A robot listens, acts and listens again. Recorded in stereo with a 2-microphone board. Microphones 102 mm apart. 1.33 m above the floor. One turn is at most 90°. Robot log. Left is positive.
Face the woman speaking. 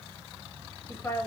note: The woman speaking: about 20° left or 160° left.
cmd yaw +20
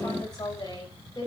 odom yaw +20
note: The woman speaking: about 35° left or 145° left.
cmd yaw +35
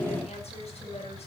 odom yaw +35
cmd idle
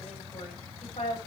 note: So it is at 110° left.
cmd yaw +90
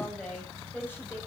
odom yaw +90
note: The woman speaking is now 20° left.
cmd yaw +20
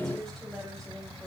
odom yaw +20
cmd idle
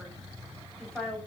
end: Facing the woman speaking, over 4 m away.